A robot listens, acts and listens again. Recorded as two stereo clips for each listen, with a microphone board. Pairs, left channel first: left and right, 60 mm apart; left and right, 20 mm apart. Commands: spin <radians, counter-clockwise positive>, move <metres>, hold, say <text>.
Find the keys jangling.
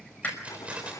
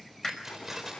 spin -0.35
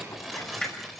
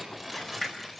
say Found it: keys jangling, straight ahead, over 4 m away.